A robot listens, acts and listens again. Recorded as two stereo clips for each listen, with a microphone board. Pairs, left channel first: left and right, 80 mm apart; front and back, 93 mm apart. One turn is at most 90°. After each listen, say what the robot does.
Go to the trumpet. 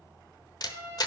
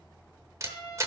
Turn 50° right.
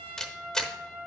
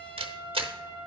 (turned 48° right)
Drive 1.0 m forward.
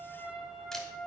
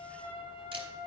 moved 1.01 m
Drive 1.0 m forward.
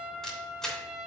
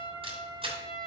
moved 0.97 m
Turn 10° right.
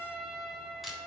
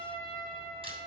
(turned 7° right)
Drive 1.0 m forward.
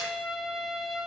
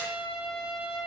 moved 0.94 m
Drive 1.0 m forward.
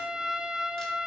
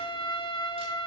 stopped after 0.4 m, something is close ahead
Turn 10° right.
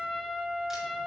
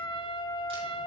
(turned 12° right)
Arrived at the trumpet, straight ahead.